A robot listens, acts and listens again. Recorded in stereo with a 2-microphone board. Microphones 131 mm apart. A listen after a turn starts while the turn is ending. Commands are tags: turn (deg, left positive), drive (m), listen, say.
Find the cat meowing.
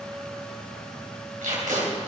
<listen/>
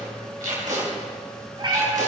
<turn deg="-40"/>
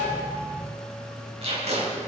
<listen/>
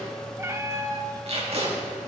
<turn deg="-25"/>
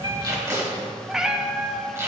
<say>Facing the cat meowing.</say>